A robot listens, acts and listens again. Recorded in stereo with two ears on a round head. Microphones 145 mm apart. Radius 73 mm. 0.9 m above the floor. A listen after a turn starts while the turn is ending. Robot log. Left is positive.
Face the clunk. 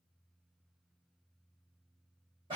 cmd idle
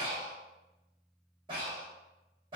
cmd idle
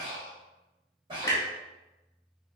note: The clunk: about 20° left or 160° left.
cmd yaw +20
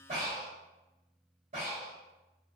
cmd idle
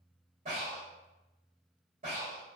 end: I heard a clunk, but can't make it out now. It was about straight ahead or 140° left.